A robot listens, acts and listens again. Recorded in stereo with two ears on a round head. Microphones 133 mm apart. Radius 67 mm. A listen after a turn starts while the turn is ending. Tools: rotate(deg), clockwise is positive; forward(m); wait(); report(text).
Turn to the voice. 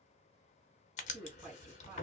rotate(15)
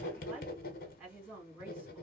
report("Found it: a woman speaking, straight ahead.")